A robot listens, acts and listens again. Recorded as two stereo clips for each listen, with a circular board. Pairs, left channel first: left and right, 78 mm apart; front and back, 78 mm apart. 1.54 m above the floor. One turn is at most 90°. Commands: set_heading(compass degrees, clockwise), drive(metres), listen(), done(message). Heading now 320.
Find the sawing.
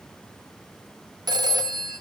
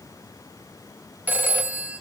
listen()
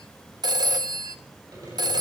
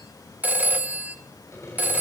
set_heading(10)
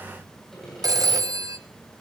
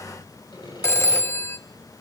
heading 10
done("Facing the sawing, over 4 m away.")